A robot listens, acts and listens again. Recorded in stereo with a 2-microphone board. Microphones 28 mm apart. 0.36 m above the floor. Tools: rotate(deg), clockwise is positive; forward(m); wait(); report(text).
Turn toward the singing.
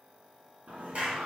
rotate(75)
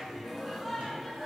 report("Facing the singing, 1 to 2 m away.")